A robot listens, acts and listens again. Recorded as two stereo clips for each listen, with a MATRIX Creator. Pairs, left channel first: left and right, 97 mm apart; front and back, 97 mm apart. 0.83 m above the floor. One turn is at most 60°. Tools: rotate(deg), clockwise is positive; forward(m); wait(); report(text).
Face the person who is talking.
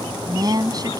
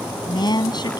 rotate(40)
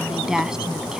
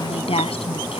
report("Facing the woman speaking.")